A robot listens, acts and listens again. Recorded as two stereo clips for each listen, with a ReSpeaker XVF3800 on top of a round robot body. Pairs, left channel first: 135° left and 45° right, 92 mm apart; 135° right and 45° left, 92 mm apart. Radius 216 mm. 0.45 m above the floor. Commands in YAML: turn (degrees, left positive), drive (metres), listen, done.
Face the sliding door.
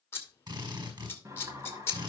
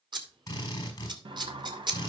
turn: 15
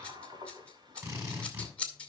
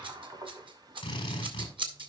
done: "Found it: a sliding door, straight ahead, 1 to 2 m away."